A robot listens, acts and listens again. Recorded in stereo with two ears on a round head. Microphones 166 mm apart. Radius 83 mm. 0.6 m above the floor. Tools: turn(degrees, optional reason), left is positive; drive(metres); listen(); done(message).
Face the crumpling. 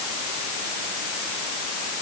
listen()
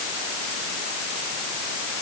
listen()
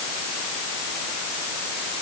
done("I can't make out crumpling to turn to.")